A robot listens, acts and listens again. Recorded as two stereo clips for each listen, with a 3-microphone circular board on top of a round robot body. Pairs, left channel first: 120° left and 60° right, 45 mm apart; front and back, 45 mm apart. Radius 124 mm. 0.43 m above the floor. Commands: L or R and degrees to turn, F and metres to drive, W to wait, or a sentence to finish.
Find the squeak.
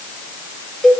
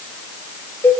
W
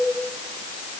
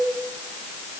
W
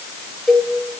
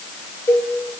I can't make out a squeak to turn to.